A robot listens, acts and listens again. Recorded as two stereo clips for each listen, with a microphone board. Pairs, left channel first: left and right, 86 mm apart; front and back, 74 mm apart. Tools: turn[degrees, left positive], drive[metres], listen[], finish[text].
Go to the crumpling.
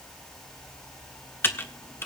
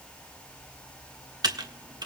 Action: listen[]
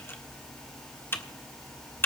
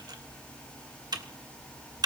Action: listen[]
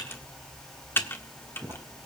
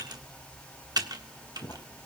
Thought: The crumpling: 45° right.
Action: turn[-45]
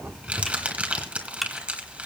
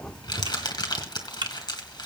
Thought: The crumpling is now 15° right.
Action: turn[-15]
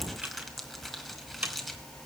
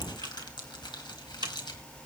Action: drive[1.0]
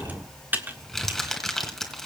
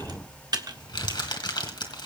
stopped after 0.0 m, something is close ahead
Action: finish[Blocked. The crumpling is further on, straight ahead.]